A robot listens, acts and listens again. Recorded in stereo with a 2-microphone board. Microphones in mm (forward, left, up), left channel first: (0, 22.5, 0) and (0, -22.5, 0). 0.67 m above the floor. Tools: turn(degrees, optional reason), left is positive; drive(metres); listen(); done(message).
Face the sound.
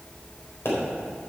turn(degrees=65, reason="The pop: about 65° left or 115° left.")
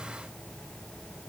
listen()
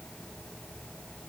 done("I heard a pop, but can't make it out now. It was about straight ahead or 50° left.")